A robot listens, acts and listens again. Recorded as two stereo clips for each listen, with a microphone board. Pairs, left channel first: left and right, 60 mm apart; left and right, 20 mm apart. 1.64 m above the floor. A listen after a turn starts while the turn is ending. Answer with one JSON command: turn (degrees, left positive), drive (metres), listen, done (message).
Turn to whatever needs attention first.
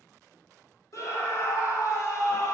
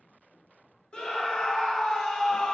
{"turn": 65}
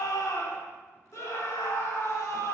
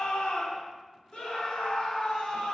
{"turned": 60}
{"turn": 55}
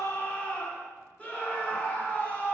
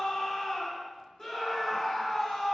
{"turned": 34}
{"turn": 20}
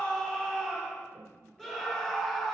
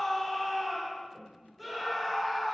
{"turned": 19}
{"done": "Found it: a scream, straight ahead."}